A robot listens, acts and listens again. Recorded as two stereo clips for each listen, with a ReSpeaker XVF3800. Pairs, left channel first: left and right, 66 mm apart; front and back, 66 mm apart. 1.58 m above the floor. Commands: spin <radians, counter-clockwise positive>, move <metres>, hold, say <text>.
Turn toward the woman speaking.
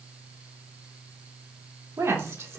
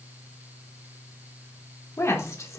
spin -0.70
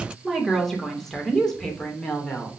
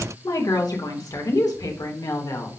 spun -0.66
spin 0.26
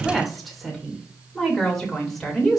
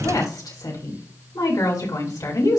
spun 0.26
say Found it: a woman speaking, straight ahead.